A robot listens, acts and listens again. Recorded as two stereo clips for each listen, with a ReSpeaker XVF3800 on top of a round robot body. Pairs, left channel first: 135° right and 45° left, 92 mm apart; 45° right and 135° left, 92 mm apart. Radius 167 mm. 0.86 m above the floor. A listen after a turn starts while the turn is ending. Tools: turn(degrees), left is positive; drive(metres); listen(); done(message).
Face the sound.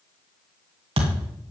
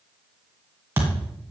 turn(degrees=65)
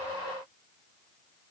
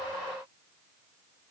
done("I heard a thud from this way, but can't make it out now.")